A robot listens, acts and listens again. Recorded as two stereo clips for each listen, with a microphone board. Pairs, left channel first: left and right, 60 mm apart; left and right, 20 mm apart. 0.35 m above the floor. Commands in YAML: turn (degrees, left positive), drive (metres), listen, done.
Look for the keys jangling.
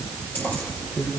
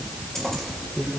turn: 35
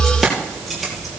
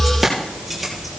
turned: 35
done: "Found it: keys jangling, straight ahead, over 4 m away."